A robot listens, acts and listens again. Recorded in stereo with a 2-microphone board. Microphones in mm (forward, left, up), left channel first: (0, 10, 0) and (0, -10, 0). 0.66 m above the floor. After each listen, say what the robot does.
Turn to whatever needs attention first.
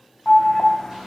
Turn 30° left.
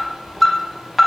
Found it: an alarm, straight ahead, 1 to 2 m away.